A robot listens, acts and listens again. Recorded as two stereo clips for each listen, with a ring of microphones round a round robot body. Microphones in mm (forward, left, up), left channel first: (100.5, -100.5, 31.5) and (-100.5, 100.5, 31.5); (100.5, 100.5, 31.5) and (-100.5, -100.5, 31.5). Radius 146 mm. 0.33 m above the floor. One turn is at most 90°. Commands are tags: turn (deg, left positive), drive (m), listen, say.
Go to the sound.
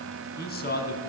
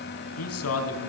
<turn deg="10"/>
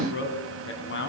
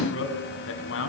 <drive m="1.0"/>
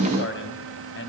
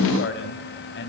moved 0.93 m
<drive m="1.0"/>
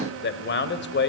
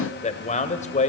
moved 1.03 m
<turn deg="-10"/>
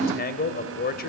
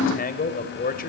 <drive m="1.0"/>
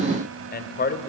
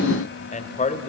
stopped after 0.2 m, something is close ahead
<say>I am next to the man speaking.</say>